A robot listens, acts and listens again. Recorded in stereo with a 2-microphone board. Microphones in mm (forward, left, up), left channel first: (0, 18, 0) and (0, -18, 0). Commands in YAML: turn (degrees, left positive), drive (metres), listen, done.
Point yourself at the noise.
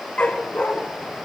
turn: 40
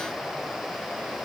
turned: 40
listen: true
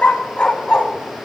turn: 30
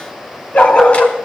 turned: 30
turn: 35
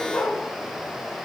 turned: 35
turn: 120
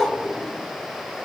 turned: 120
done: "Found it: a dog barking, straight ahead, 2 to 4 m away."